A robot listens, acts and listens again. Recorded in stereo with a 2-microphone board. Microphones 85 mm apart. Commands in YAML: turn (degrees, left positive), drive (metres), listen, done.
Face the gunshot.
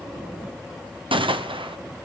turn: -90
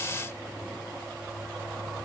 done: "Facing where the gunshot came from. I can't hear it now."